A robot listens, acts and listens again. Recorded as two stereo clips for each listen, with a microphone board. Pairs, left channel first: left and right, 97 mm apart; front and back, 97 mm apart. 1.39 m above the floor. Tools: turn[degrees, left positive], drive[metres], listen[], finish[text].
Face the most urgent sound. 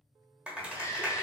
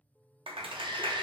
Thought: The shout: 150° left.
Action: turn[150]
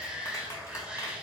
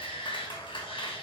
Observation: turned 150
Thought: The shout is now 10° right.
Action: turn[-10]
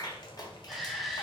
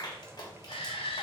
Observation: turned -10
Action: finish[Facing the shout, 1 to 2 m away.]